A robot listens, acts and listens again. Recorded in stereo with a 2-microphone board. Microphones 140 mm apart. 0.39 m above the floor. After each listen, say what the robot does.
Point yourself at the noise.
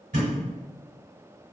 Turn 65° right.
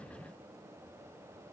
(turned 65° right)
Keep listening.
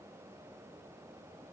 I heard a thud, but can't make it out now. It was about straight ahead or 50° right.